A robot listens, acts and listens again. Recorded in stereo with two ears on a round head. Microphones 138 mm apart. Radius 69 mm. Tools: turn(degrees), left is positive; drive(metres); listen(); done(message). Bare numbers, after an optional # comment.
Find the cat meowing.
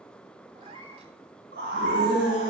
# The cat meowing: about 40° right or 140° right.
turn(-40)
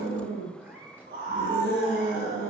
# So it is at 10° right.
turn(-10)
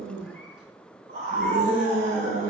listen()
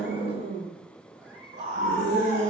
listen()
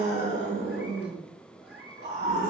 # The cat meowing is now 10° right.
turn(-10)
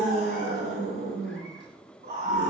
listen()
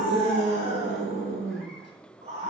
listen()
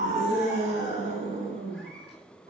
done("I heard a cat meowing from this way, but can't make it out now.")